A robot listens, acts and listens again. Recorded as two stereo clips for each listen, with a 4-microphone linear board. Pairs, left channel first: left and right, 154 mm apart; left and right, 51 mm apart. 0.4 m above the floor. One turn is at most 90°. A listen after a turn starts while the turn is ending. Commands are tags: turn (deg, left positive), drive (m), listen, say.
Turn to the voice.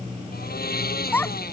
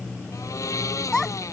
<turn deg="30"/>
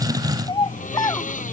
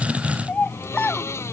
<turn deg="90"/>
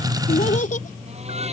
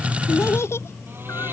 <turn deg="60"/>
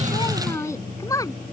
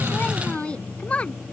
<turn deg="25"/>
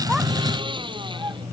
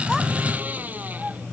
<listen/>
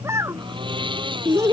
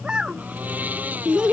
<turn deg="-20"/>
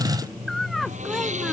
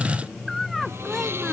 <say>Found it: a child speaking, straight ahead.</say>